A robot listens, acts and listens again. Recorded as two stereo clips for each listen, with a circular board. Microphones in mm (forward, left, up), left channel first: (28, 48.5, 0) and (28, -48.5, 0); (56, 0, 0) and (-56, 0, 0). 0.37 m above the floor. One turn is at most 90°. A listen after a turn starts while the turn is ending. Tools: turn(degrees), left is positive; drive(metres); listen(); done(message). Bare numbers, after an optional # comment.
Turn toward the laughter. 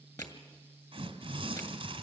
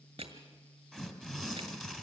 listen()
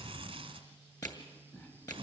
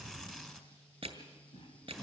# The laughter: 20° left.
turn(20)
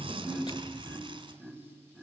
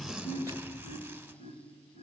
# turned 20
done("Facing the laughter, 2 to 4 m away.")